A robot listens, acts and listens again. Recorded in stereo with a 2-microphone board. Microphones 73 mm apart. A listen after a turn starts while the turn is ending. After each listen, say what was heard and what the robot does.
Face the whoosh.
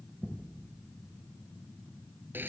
Keep listening.
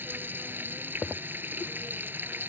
Keep listening.
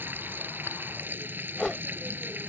Turn 30° left.
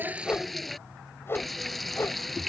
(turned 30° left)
So it is at 145° left. Turn 145° left.
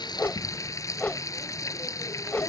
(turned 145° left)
The whoosh is now 20° left. Turn 20° left.
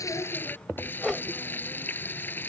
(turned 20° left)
Found it: a whoosh, straight ahead.